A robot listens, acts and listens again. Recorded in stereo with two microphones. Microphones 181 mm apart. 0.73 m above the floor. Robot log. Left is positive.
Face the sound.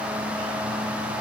cmd idle
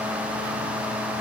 cmd idle
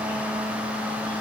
end: I can't make out anything.